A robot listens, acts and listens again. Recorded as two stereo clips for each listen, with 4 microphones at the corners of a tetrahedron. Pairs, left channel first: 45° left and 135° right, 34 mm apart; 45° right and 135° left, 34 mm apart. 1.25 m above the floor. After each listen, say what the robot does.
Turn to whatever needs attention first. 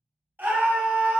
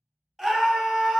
Turn 145° right.
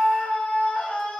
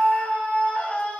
Facing the scream.